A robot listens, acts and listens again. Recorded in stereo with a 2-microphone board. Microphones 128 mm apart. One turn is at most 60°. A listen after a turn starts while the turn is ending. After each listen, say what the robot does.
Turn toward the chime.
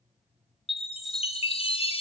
Turn 45° left.
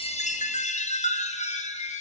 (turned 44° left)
Turn 60° left.
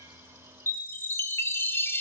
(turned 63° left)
Turn 20° left.
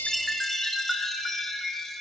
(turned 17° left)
Found it: a chime, straight ahead.